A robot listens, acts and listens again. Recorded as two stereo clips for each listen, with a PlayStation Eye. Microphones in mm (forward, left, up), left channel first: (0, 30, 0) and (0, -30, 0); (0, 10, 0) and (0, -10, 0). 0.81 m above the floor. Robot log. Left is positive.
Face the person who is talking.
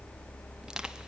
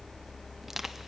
cmd idle
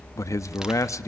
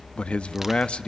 note: The man speaking: about 60° left or 120° left.
cmd yaw +60
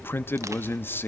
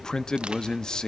note: So it is at 45° left.
cmd yaw +45
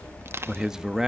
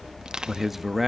note: The man speaking is now 10° right.
cmd yaw -10
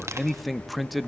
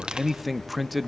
end: Found it: a man speaking, straight ahead, under 1 m away.